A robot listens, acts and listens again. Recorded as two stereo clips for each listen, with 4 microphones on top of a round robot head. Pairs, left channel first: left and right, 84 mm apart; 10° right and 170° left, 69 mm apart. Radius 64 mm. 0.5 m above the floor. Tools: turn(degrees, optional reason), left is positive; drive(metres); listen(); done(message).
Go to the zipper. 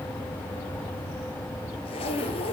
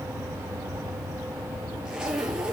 turn(degrees=90, reason="The zipper: 90° left.")
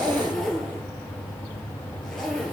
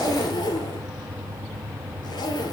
drive(metres=1.0)
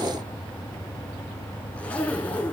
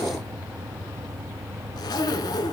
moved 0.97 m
turn(degrees=10, reason="The zipper is now 10° left.")
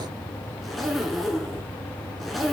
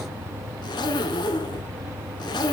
drive(metres=1.0)
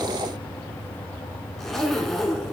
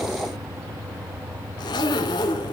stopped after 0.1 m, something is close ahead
done("Arrived at the zipper, straight ahead.")